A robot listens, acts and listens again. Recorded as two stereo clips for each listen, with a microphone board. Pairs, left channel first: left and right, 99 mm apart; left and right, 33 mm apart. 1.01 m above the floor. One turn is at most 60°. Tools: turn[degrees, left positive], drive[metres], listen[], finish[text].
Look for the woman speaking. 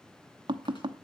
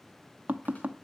Action: listen[]
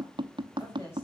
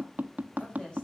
Thought: The woman speaking: about 30° left or 150° left.
Action: turn[30]
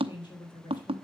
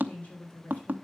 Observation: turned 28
Thought: So it is at 125° left.
Action: turn[60]
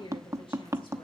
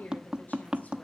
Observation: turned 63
Thought: The woman speaking is now 65° left.
Action: turn[60]
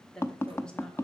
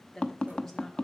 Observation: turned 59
Thought: The woman speaking is now 10° left.
Action: turn[10]
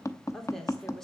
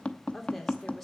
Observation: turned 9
Action: finish[Facing the woman speaking.]